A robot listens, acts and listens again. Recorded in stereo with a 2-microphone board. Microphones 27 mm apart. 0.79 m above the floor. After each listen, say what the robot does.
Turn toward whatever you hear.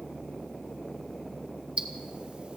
Turn 45° right.
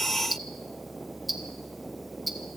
Found it: ticking, straight ahead.